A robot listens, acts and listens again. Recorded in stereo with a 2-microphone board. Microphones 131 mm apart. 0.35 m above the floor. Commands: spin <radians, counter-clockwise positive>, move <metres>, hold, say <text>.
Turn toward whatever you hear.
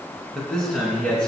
spin 0.52
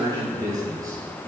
spin -0.44
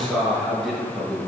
say Facing the man speaking, over 4 m away.